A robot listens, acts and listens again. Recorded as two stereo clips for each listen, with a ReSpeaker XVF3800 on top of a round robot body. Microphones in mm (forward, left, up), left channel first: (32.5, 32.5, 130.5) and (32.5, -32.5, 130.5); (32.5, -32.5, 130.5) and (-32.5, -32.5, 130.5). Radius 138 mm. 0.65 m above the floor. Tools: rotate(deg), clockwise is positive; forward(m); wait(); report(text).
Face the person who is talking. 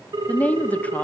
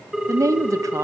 rotate(-155)
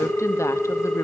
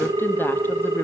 wait()
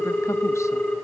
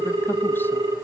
wait()
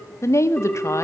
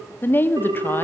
rotate(-55)
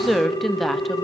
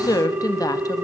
report("Found it: a woman speaking, straight ahead, 1 to 2 m away.")